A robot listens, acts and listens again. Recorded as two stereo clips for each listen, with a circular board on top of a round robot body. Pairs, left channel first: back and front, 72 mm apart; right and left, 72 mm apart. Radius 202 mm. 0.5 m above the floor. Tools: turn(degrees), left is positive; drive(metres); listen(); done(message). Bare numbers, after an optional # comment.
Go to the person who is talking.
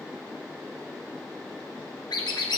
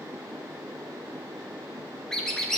listen()
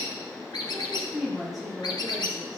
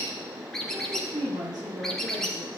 # The woman speaking: 85° left.
turn(85)
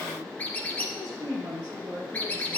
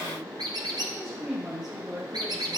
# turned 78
# The woman speaking is now 10° left.
turn(10)
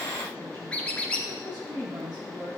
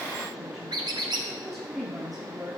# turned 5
drive(1.0)
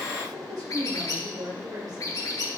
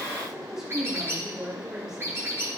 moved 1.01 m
# The woman speaking is now 10° left.
turn(10)
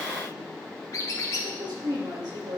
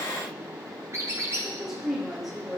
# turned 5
drive(1.0)
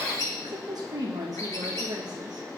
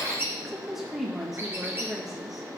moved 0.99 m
drive(1.0)
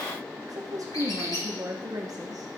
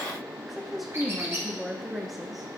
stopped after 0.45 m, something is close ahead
done("Arrived at the woman speaking, straight ahead.")